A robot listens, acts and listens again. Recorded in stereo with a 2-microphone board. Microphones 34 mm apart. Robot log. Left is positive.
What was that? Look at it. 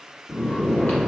note: The snoring: about 55° left or 125° left.
cmd yaw +55
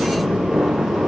note: So it is at 15° left.
cmd yaw +15
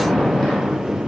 end: Found it: snoring, straight ahead, 1 to 2 m away.